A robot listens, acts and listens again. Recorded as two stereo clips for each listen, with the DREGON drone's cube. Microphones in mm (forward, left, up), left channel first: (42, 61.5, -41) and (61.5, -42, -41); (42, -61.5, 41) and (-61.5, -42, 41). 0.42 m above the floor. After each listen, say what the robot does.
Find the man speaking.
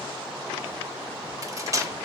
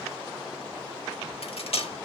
Keep listening.
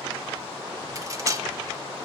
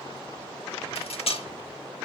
Keep listening.
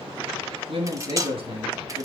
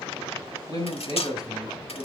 Turn 60° right.
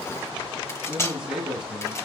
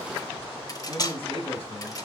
Found it: a man speaking, straight ahead, 2 to 4 m away.